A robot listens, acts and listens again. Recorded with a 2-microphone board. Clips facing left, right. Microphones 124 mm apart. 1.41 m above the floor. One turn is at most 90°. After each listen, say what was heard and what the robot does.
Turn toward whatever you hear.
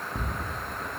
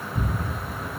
Turn 90° left.
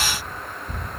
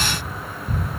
So it is at 10° right. Turn 10° right.
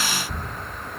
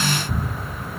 Found it: ticking, straight ahead, under 1 m away.